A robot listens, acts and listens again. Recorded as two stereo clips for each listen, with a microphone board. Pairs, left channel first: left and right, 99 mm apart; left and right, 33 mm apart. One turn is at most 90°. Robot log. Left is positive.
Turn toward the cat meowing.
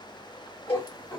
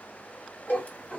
note: The cat meowing: about 45° left or 135° left.
cmd yaw +45
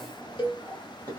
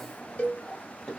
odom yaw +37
note: So it is at 20° left.
cmd yaw +20
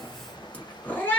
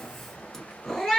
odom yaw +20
note: The cat meowing is now 25° left.
cmd yaw +25
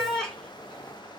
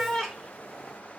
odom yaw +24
end: Found it: a cat meowing, straight ahead, 1 to 2 m away.